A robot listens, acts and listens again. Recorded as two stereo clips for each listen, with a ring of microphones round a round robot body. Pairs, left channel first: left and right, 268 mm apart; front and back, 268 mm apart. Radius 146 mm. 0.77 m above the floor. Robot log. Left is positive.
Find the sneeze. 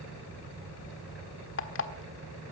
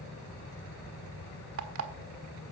cmd idle
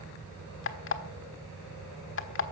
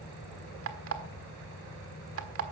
cmd idle
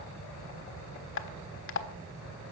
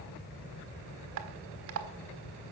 end: I can't make out a sneeze, only an alarm clock.